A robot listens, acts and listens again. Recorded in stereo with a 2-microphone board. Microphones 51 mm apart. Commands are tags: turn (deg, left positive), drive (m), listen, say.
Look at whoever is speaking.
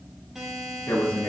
<turn deg="90"/>
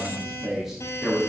<say>Facing the man speaking.</say>